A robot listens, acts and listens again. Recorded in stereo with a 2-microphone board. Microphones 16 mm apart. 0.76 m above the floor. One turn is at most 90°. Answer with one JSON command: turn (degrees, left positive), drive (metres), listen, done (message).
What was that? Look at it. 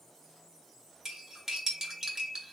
{"turn": -30}
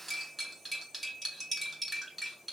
{"done": "Facing the cutlery clinking, 1 to 2 m away."}